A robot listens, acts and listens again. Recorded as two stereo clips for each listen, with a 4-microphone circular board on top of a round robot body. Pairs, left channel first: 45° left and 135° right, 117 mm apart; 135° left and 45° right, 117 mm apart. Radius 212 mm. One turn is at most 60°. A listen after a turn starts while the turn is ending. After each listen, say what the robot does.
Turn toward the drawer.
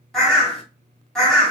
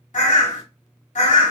Keep listening.
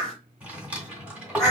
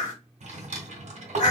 Turn 55° right.
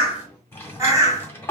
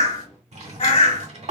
Turn 25° right.
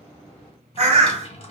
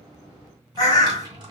Turn 10° left.
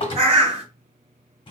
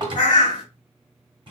Found it: a drawer, straight ahead, 1 to 2 m away.